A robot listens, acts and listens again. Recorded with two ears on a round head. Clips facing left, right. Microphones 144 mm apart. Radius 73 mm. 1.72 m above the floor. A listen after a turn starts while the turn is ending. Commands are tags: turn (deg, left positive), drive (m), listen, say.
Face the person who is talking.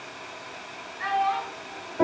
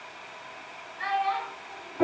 <turn deg="-20"/>
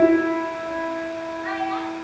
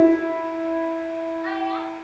<listen/>
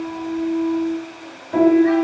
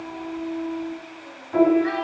<listen/>
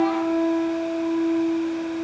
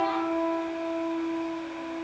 <say>I heard a child speaking, but can't make it out now. It was about straight ahead or 140° right.</say>